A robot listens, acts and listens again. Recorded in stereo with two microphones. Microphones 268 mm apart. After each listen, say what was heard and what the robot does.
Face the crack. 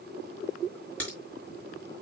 Turn 30° left.
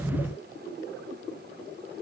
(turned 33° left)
Keep listening.
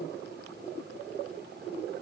I heard a crack, but can't make it out now. It was about 30° right or 140° left.